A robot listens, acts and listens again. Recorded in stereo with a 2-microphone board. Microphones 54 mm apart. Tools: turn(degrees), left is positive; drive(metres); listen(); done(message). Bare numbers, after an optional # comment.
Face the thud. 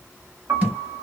# The thud: about 25° right or 155° right.
turn(-25)
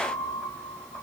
listen()
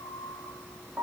done("I heard a thud, but can't make it out now. It was about straight ahead or 130° right.")